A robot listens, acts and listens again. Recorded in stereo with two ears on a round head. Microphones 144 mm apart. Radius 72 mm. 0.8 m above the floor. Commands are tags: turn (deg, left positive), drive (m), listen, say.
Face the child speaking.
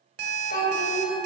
<turn deg="65"/>
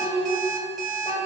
<turn deg="30"/>
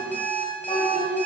<turn deg="35"/>
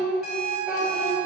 <say>Found it: a child speaking, straight ahead, 2 to 4 m away.</say>